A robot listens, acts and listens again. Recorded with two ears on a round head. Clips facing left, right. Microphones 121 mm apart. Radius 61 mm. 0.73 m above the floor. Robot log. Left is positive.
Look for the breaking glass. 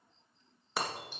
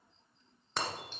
cmd yaw +30
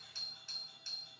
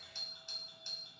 cmd idle
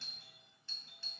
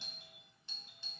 end: I heard breaking glass, but can't make it out now. It was about 25° right or 145° left.